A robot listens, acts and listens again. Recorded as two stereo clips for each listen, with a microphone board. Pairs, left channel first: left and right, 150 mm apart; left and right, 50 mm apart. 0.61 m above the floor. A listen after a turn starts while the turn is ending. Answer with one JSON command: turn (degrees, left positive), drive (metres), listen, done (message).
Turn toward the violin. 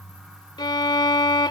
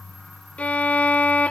{"turn": 30}
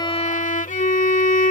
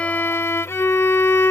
{"turn": 120}
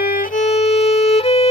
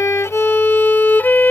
{"turn": 45}
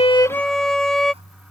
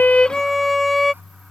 {"done": "Found it: a violin, straight ahead."}